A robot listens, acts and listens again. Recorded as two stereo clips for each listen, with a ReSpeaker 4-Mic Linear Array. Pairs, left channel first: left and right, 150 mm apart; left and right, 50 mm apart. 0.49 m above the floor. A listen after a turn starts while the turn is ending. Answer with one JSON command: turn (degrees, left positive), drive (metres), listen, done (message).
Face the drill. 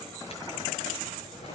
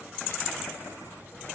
{"listen": true}
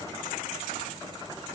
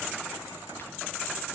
{"listen": true}
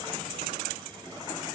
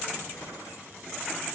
{"done": "I can't make out a drill to turn to."}